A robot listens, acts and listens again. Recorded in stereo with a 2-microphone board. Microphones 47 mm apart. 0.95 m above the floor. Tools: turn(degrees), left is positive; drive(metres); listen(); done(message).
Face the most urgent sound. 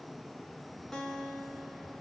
listen()
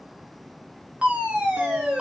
turn(degrees=-25)
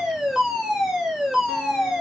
done("Facing the fire alarm.")